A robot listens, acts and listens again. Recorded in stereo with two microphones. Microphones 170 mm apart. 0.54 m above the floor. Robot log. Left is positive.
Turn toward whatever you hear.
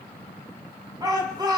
note: The shout: about 25° right or 155° right.
cmd yaw -25
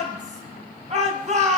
note: So it is at 135° right.
cmd yaw -135
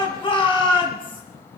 note: The shout is now 30° left.
cmd yaw +30
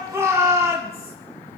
note: The shout is now 15° right.
cmd yaw -15
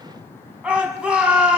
end: Facing the shout.